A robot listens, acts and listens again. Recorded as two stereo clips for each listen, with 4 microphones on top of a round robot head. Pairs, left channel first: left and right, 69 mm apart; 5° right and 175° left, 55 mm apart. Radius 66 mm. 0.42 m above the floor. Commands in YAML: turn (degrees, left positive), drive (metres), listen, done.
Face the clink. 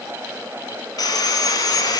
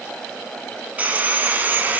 listen: true
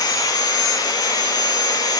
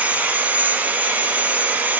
listen: true
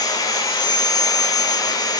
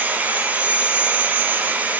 done: "I can't make out a clink to turn to."